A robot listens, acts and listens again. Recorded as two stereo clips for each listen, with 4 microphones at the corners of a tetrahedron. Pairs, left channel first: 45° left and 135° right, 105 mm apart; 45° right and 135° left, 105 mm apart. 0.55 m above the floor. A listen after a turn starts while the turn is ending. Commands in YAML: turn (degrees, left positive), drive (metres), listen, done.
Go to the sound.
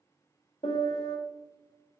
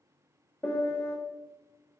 turn: 25
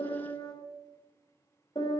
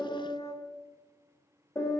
turn: 10
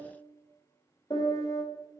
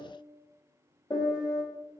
drive: 1.0
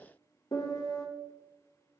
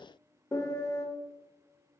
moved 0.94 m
drive: 1.0
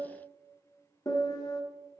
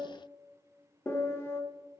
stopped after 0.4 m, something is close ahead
turn: 10
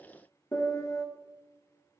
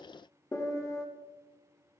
done: "Arrived at the piano, straight ahead."